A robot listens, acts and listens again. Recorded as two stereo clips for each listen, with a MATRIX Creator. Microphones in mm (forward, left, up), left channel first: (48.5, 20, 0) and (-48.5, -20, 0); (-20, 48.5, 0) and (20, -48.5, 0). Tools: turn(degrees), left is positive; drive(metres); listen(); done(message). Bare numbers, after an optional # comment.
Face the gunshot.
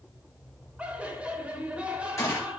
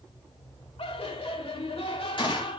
# The gunshot: 80° left.
turn(80)
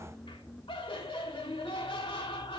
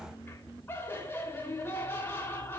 done("Facing where the gunshot came from. I can't hear it now.")